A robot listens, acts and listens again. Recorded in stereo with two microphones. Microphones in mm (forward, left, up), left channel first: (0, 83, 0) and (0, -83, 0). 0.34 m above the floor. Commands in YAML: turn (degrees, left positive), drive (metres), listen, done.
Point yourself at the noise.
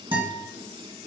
turn: -30
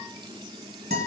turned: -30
turn: -120
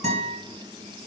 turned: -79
turn: -45
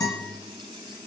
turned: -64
turn: 20
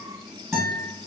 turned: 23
done: "Facing the guitar."